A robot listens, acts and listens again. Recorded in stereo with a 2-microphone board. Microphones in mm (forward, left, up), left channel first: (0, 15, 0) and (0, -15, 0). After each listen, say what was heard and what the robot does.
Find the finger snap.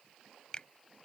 The finger snap: about 30° left or 150° left. Turn 30° left.
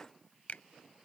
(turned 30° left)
So it is at 110° left. Turn 110° left.
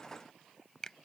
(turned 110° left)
The finger snap is now 15° left. Turn 15° left.
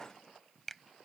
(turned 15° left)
Facing the finger snap.